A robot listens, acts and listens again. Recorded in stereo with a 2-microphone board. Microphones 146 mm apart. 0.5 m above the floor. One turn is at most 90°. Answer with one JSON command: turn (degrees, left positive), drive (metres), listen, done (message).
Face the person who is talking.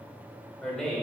{"turn": 30}
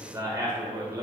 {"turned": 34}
{"turn": -30}
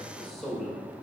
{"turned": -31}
{"done": "Facing the man speaking, 1 to 2 m away."}